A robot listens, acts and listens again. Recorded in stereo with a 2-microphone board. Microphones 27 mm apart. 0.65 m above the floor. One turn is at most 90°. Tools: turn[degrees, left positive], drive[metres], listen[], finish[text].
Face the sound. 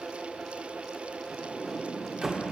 Thought: The sliding door: about 20° right or 160° right.
Action: turn[-20]
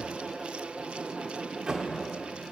Thought: So it is at 135° right.
Action: turn[-90]
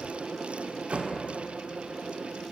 Thought: The sliding door is now 60° right.
Action: turn[-60]
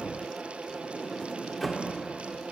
Action: finish[Facing the sliding door, 1 to 2 m away.]